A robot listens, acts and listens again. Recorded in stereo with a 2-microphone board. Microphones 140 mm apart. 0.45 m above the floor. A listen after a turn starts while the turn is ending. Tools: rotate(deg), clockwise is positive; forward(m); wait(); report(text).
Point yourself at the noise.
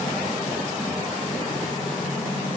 wait()
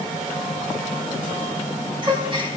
rotate(35)
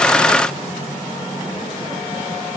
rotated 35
wait()
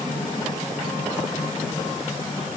report("I heard a gasp, but can't make it out now. It was about straight ahead or 110° right.")